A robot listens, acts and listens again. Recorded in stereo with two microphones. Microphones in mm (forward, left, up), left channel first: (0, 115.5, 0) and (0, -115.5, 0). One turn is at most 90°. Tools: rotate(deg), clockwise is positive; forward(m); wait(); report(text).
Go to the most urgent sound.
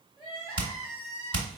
rotate(-20)
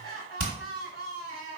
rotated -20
rotate(-90)
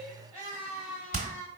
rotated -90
rotate(-30)
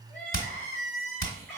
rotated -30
forward(1.0)
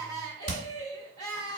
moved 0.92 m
rotate(-15)
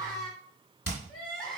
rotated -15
forward(1.0)
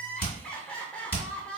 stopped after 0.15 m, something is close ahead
report("Arrived at the crying, straight ahead.")